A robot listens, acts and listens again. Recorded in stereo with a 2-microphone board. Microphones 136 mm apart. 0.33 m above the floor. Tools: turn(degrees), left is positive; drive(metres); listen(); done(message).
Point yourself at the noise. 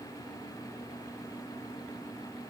listen()
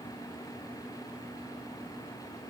listen()
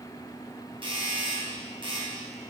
turn(degrees=-40)
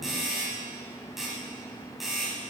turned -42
done("Facing the doorbell.")